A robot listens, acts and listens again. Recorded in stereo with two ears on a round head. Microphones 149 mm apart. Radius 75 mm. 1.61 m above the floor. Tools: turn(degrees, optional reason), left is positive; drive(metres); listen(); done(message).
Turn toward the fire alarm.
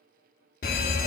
turn(degrees=55, reason="The fire alarm: about 55° left or 125° left.")
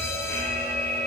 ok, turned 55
turn(degrees=20, reason="So it is at 20° left.")
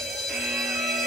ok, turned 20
done("Facing the fire alarm.")